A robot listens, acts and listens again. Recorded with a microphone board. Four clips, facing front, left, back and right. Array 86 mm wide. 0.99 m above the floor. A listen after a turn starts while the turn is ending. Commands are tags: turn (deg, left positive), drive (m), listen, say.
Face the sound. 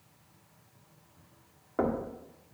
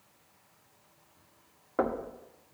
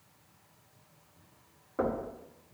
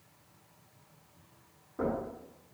<turn deg="70"/>
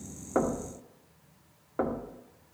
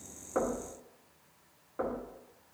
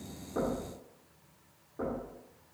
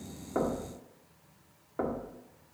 <turn deg="-10"/>
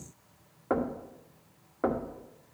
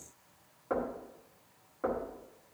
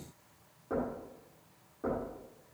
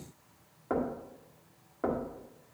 <turn deg="-10"/>
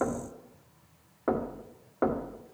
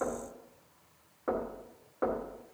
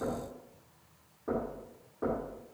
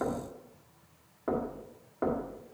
<say>Facing the knocking, 1 to 2 m away.</say>